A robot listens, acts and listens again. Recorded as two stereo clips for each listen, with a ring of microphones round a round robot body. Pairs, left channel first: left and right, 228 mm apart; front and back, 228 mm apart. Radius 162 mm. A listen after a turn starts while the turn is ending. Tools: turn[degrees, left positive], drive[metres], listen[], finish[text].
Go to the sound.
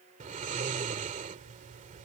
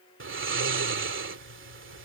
Thought: The snoring: 155° right.
Action: turn[-155]
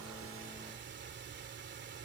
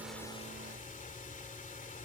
Thought: The snoring is now 55° right.
Action: turn[-55]
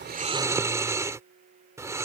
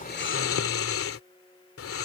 Thought: The snoring is now 15° right.
Action: turn[-15]
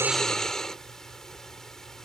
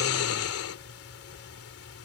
Action: drive[1.0]
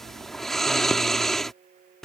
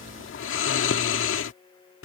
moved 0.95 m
Action: drive[1.0]
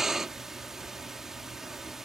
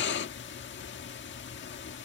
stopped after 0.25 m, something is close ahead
Action: finish[I am next to the snoring.]